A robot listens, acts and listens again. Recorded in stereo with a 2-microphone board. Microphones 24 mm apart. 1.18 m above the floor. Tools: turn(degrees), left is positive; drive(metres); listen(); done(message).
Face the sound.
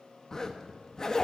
turn(degrees=25)
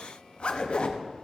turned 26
turn(degrees=130)
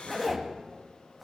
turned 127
done("Facing the zipper.")